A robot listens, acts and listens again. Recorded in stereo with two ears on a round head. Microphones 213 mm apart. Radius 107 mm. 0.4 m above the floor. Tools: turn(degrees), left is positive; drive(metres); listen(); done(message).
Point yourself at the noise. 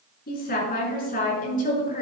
turn(degrees=35)
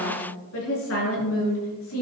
turn(degrees=115)
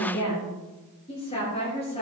turn(degrees=25)
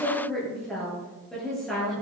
done("Found it: a woman speaking, straight ahead, over 4 m away.")